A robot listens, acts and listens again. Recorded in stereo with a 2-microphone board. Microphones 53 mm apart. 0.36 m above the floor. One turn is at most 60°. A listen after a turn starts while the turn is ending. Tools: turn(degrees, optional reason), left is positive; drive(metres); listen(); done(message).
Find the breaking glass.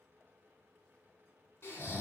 listen()
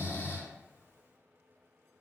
listen()
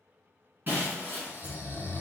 turn(degrees=-40, reason="The breaking glass: about 40° right or 140° right.")
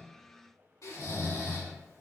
listen()
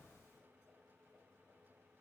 done("I heard breaking glass, but can't make it out now. It was about straight ahead or 100° right.")